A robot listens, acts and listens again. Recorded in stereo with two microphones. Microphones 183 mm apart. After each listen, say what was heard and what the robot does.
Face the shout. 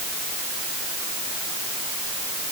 Keep listening.
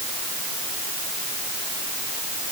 Keep listening.
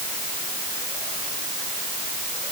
I can't make out a shout to turn to.